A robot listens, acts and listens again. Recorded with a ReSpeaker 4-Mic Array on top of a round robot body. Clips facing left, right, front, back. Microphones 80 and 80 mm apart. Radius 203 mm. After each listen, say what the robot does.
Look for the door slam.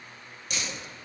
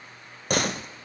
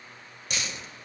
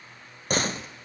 Turn 130° right.
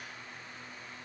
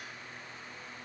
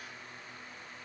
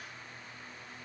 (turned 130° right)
Facing where the door slam came from. I can't hear it now.